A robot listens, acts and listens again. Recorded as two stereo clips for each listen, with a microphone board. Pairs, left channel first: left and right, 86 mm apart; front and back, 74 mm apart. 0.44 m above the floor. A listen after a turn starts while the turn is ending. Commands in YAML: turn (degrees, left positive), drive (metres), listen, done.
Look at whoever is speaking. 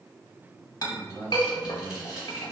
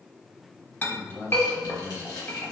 turn: 20
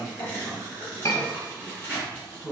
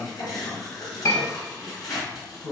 done: "Found it: a man speaking, straight ahead, 1 to 2 m away."